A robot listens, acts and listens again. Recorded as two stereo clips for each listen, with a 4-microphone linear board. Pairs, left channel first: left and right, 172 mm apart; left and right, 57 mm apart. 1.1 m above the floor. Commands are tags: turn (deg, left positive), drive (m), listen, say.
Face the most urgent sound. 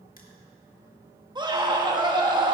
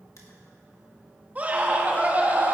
<turn deg="-25"/>
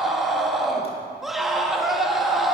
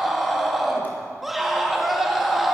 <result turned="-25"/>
<say>Found it: a scream, straight ahead, 1 to 2 m away.</say>